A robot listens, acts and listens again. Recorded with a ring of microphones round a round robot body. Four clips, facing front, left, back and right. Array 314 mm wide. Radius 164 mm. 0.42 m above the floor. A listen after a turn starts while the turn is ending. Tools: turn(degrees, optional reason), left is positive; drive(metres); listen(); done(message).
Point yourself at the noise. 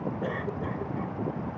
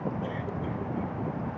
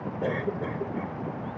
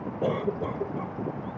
turn(degrees=-120, reason="The cough: 120° right.")
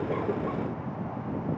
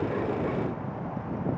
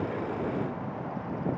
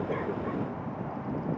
listen()
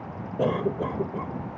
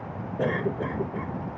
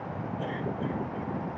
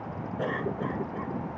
turn(degrees=25, reason="The cough is now 25° left.")
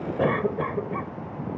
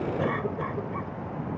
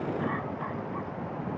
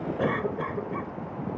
turn(degrees=-10, reason="The cough is now 10° right.")
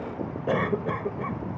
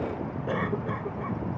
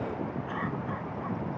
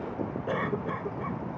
done("Found it: a cough, straight ahead.")